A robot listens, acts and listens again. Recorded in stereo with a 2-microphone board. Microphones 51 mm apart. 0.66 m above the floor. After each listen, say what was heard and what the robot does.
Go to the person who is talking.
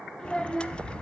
Turn 30° left.
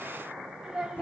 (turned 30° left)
So it is at 15° right. Turn 15° right.
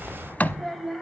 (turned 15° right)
Drive 1.0 m forward.
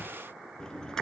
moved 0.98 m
Keep listening.
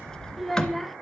Drive 1.0 m forward.
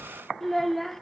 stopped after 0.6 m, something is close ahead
I am next to the child speaking.